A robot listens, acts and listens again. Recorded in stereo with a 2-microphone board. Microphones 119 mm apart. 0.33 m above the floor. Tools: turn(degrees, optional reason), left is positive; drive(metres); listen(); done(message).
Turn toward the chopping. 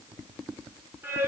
listen()
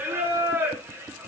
listen()
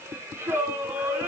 done("I can't make out chopping, only singing.")